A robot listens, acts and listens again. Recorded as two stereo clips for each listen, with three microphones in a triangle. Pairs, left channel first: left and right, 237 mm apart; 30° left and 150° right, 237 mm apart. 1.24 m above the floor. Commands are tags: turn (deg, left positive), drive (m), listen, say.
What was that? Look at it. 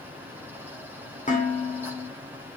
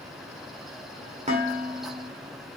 <turn deg="150"/>
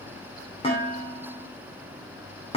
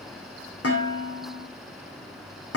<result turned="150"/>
<turn deg="25"/>
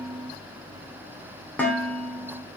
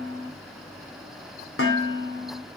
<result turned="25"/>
<say>Facing the dishes clattering.</say>